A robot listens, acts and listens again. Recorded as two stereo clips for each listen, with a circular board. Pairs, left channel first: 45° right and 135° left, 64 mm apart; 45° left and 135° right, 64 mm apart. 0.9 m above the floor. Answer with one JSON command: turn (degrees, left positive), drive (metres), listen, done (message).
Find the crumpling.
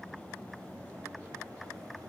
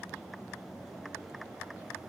{"listen": true}
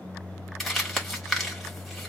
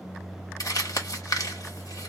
{"turn": 45}
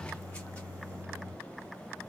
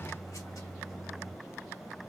{"listen": true}
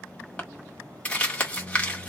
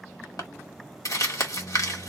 {"turn": 25}
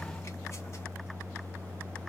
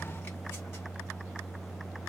{"listen": true}
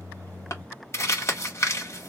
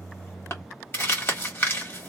{"done": "Facing the crumpling."}